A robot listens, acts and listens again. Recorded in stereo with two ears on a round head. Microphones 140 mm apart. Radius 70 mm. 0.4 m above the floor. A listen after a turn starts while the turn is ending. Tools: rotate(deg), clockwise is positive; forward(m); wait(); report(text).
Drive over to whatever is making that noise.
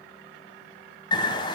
rotate(-30)
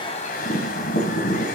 rotate(-115)
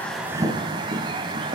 rotate(30)
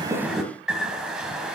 forward(1.0)
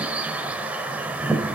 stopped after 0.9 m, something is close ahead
rotate(10)
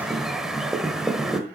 report("I am next to the bird.")